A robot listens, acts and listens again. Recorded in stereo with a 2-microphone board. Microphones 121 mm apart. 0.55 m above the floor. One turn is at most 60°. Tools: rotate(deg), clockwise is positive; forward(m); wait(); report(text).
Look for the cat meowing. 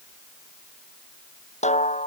wait()
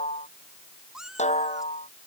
rotate(30)
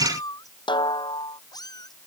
rotate(-30)
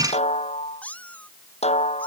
rotate(-10)
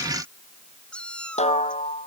rotate(-10)
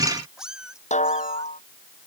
report("Facing the cat meowing.")